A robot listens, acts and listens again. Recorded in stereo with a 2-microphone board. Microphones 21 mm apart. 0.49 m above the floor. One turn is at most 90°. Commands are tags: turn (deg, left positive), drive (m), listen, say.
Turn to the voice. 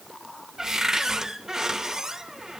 <listen/>
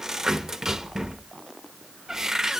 <listen/>
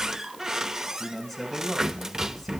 <turn deg="30"/>
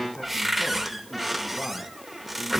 <listen/>
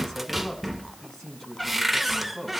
<turn deg="90"/>
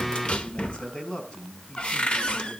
<turn deg="60"/>
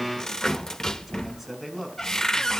<say>Facing the man speaking.</say>